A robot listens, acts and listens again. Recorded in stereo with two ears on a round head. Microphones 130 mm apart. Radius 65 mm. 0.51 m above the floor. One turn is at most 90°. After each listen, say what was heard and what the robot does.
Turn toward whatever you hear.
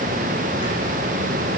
Keep listening.
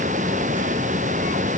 Keep listening.
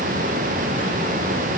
I can't make out anything to turn to.